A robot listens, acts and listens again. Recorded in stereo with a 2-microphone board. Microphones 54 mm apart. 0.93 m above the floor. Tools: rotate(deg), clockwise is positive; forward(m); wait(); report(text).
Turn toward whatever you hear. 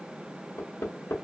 rotate(-65)
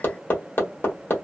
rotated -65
rotate(-45)
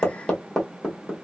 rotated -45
rotate(-10)
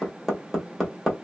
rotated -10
report("Found it: hammering, straight ahead, 1 to 2 m away.")